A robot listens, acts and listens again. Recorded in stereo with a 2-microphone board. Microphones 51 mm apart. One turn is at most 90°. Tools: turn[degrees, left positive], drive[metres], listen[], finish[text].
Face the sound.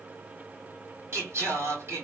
Thought: The singing: about 60° right or 120° right.
Action: turn[-60]
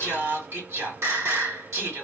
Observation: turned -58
Thought: So it is at 65° right.
Action: turn[-65]
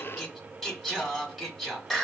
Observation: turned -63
Action: finish[Facing the singing.]